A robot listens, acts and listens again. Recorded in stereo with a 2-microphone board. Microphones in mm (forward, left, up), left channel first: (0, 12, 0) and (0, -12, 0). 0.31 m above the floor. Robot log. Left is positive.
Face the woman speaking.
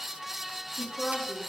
note: The woman speaking: about 30° left or 150° left.
cmd yaw +30
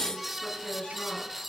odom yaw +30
note: So it is at 130° left.
cmd yaw +130
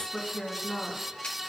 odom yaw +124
note: The woman speaking is now 25° left.
cmd yaw +25
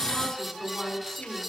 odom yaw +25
note: The woman speaking is now 10° left.
cmd yaw +10
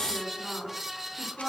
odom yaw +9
end: Found it: a woman speaking, straight ahead, 2 to 4 m away.